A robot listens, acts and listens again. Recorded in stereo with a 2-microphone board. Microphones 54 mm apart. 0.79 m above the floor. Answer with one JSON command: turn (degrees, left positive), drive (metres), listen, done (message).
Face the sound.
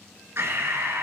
{"turn": -55}
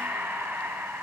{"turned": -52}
{"turn": -70}
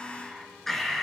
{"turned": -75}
{"done": "Facing the breathing, 1 to 2 m away."}